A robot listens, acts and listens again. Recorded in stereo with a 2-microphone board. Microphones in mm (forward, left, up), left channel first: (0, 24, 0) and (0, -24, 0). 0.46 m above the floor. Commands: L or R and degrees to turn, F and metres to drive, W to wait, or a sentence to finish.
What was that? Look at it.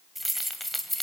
L30
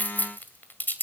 L135
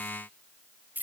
R45
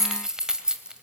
R20
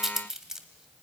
R15
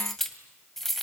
Facing the keys jangling, 2 to 4 m away.